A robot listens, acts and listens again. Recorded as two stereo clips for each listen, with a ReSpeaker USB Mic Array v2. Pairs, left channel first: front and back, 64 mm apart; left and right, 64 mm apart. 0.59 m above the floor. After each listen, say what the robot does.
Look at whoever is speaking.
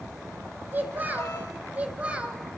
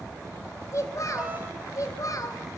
Turn 110° left.
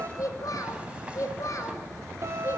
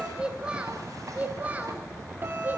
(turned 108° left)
Turn 35° right.
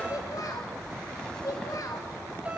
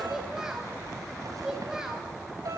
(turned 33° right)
Turn 10° right.
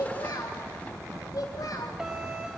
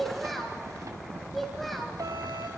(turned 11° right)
Found it: a child speaking, straight ahead.